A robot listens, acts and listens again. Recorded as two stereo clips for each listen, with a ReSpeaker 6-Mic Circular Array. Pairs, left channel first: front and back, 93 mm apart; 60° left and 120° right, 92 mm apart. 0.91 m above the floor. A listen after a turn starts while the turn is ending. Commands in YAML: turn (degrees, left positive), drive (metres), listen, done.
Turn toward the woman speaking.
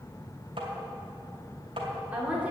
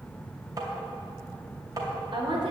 turn: -105
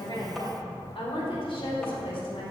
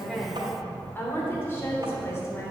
done: "Found it: a woman speaking, straight ahead, 2 to 4 m away."